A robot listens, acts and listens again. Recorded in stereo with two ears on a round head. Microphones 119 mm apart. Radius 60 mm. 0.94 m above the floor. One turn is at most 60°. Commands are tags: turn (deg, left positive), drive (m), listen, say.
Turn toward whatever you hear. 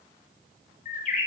<turn deg="60"/>
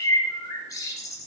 <turn deg="30"/>
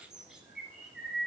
<say>Found it: a bird, straight ahead, 1 to 2 m away.</say>